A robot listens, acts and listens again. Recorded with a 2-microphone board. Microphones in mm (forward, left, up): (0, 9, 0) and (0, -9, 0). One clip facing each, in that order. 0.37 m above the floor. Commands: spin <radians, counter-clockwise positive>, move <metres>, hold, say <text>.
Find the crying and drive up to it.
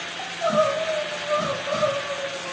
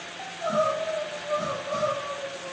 spin 0.61
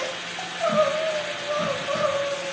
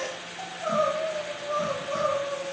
spin 1.92
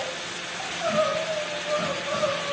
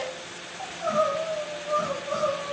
spin 0.44
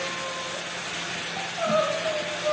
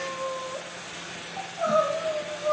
spin 0.17
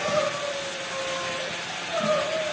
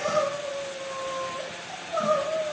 move 1.0
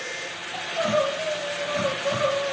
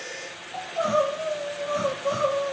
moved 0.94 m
move 1.0
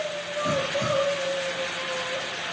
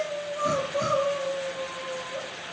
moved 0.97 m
move 1.0
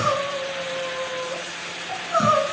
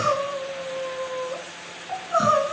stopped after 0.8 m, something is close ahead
say I am next to the crying.